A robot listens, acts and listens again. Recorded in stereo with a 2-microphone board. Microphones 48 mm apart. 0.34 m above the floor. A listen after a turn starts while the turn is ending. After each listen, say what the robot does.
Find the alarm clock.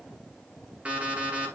Turn 25° right.
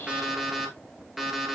Found it: an alarm clock, straight ahead, 2 to 4 m away.